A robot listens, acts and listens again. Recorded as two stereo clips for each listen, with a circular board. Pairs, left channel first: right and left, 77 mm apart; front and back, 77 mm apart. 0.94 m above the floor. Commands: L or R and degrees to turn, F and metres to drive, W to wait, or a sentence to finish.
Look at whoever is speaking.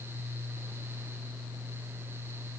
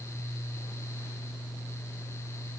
W
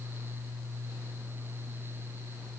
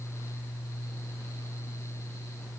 W
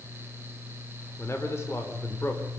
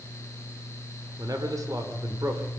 R145
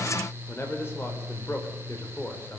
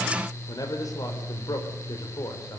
R35
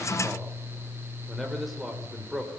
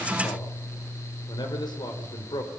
Facing the man speaking.